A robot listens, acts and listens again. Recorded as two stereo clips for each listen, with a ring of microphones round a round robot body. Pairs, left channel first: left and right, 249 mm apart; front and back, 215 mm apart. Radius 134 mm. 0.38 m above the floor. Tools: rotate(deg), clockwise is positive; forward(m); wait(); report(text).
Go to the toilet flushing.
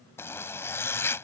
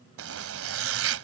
wait()
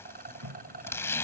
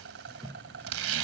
rotate(105)
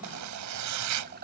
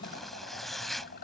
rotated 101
wait()
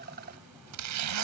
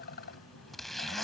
wait()
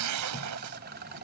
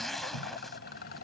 report("Facing where the toilet flushing came from. I can't hear it now. I did not reach it.")